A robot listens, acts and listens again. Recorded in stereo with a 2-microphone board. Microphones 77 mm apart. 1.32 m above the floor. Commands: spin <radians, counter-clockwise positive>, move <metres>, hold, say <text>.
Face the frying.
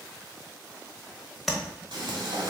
spin -1.57
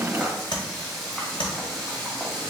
say Found it: frying, straight ahead, 2 to 4 m away.